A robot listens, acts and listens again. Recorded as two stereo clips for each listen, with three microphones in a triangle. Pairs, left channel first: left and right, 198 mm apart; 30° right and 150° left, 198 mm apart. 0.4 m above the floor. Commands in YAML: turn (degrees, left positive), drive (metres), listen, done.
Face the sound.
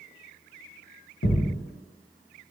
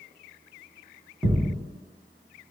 turn: 65
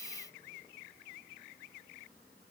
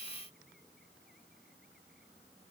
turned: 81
turn: -15
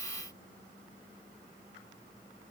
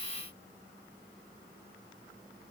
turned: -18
done: "I heard a thud from this way, but can't make it out now."